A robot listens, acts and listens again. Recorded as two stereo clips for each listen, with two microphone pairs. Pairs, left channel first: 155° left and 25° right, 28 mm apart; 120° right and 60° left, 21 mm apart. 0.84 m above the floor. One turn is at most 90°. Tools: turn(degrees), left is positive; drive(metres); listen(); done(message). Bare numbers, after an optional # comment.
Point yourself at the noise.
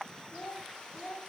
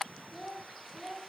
# The child speaking: 175° left.
turn(90)
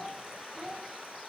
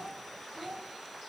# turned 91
# The child speaking is now 65° left.
turn(65)
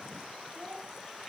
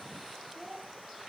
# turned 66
# The child speaking is now 25° right.
turn(-25)
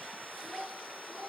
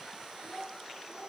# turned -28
# The child speaking is now 15° right.
turn(-15)
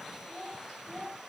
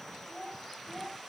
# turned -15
# The child speaking is now 10° right.
turn(-10)
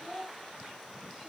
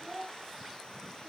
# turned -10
done("Found it: a child speaking, straight ahead.")